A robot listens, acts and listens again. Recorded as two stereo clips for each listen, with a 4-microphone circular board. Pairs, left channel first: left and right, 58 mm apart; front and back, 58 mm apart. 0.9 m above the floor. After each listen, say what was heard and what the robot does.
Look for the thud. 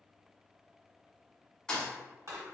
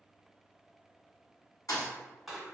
The thud: 15° left. Turn 15° left.
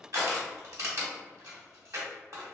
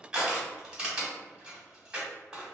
I heard a thud from this way, but can't make it out now.